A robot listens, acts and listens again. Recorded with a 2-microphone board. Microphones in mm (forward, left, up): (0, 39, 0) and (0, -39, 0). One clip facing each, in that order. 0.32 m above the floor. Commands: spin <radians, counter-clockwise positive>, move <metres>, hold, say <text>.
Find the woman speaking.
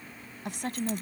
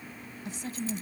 spin 1.05
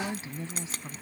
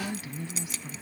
spin 0.52
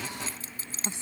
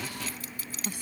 spin 0.44
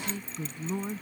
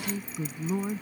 say Facing the woman speaking.